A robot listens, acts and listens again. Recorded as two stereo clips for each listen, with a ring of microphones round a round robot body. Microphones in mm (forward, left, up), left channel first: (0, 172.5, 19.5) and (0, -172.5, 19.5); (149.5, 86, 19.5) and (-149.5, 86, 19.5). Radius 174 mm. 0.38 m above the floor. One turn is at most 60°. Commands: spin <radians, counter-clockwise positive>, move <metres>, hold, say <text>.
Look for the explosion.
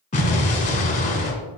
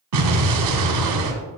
spin 1.05
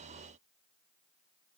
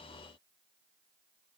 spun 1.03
spin 1.05
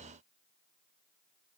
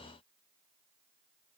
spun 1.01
spin 0.79
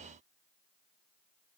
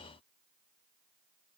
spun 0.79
say Facing where the explosion came from. I can't hear it now.